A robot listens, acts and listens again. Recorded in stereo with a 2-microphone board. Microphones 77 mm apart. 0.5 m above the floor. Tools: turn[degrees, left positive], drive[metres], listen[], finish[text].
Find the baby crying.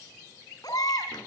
Thought: The baby crying: about 60° left or 120° left.
Action: turn[60]
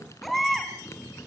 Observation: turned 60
Action: finish[Facing the baby crying, 2 to 4 m away.]